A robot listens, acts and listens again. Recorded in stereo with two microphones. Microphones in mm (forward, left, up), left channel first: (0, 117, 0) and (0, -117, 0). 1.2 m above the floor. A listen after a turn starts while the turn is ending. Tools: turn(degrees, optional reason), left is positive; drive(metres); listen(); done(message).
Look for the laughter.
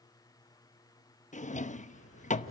turn(degrees=65, reason="The laughter: about 65° left or 115° left.")
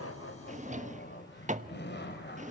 turn(degrees=50, reason="So it is at 50° left.")
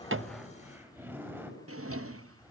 turn(degrees=-10, reason="The laughter is now 10° right.")
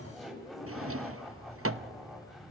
done("Facing the laughter, over 4 m away.")